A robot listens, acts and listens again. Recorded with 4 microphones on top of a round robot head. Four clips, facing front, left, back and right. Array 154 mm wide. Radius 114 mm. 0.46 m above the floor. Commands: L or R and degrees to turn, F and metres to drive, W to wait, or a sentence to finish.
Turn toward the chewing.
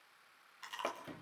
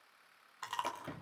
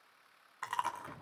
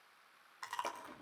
L165
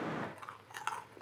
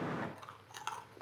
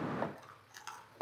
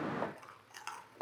L25
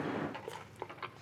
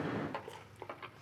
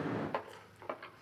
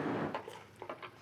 Found it: chewing, straight ahead, 1 to 2 m away.